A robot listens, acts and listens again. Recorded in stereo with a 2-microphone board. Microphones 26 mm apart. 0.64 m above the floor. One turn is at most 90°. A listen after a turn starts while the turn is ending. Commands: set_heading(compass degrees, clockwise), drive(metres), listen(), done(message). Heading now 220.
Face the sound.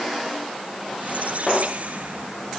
set_heading(290)
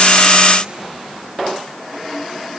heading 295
listen()
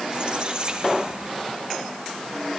set_heading(330)
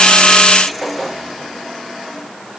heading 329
listen()
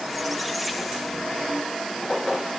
listen()
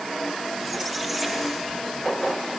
done("I heard a squeak from this way, but can't make it out now.")